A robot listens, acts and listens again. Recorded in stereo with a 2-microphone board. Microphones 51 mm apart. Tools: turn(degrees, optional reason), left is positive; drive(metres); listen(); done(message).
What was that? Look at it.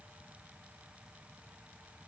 listen()
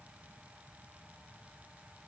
listen()
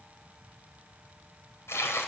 turn(degrees=65, reason="The tearing paper: about 65° left or 115° left.")
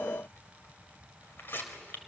turn(degrees=45, reason="So it is at 45° left.")
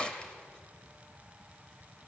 turn(degrees=20, reason="The tearing paper is now 20° left.")
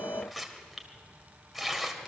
done("Found it: tearing paper, straight ahead.")